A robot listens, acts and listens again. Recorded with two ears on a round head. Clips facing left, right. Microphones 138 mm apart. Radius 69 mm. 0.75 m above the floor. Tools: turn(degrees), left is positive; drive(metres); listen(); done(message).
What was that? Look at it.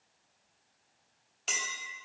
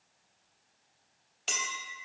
turn(degrees=30)
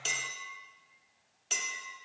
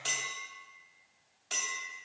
turn(degrees=155)
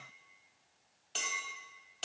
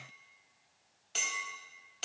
done("Found it: a clink, straight ahead, under 1 m away.")